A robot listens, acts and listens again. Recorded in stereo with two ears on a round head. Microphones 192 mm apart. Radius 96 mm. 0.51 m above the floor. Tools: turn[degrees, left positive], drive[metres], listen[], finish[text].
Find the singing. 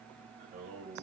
Thought: The singing: about 35° right or 145° right.
Action: turn[-35]
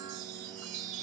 Action: listen[]
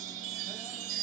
Action: listen[]
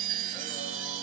Action: finish[I heard singing, but can't make it out now. It was about straight ahead or 110° right.]